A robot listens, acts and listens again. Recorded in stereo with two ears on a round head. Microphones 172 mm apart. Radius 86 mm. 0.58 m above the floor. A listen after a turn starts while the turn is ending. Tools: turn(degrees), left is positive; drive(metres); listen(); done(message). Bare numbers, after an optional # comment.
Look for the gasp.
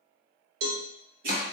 listen()
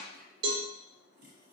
listen()
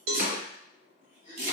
# The gasp: about 25° left or 155° left.
turn(25)
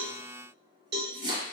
listen()
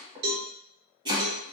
done("I heard a gasp, but can't make it out now. It was about straight ahead or 130° left.")